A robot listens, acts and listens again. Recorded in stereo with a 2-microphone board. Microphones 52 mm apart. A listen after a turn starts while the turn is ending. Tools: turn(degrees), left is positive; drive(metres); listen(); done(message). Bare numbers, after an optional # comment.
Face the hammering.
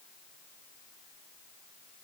listen()
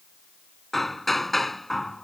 turn(30)
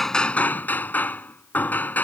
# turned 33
# So it is at 145° left.
turn(145)
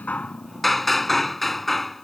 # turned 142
done("Found it: hammering, straight ahead.")